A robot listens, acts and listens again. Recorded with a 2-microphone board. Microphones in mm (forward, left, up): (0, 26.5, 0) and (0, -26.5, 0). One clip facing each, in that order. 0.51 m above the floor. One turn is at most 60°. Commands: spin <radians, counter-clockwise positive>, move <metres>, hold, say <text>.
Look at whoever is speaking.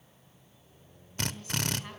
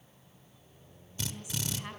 spin -0.52
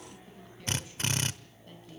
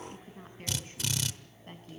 spin -1.05
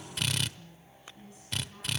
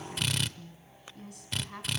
spin -1.05
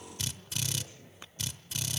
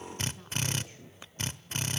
spin -0.52
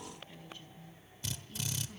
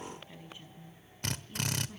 spin -0.26
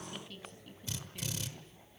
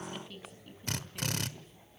say Facing the woman speaking, over 4 m away.